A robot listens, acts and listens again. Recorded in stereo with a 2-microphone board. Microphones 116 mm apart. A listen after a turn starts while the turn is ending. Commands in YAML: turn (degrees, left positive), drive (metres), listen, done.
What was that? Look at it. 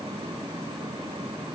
listen: true
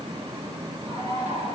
turn: -90
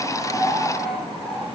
done: "Facing the bird."